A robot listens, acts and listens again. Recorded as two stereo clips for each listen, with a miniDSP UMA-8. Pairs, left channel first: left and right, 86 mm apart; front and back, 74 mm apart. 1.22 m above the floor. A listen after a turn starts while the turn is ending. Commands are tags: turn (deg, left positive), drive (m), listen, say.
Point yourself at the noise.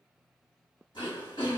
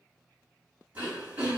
<turn deg="110"/>
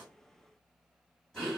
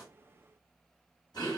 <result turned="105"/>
<turn deg="10"/>
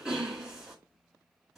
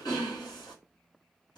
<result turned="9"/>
<say>Facing the throat clearing, 1 to 2 m away.</say>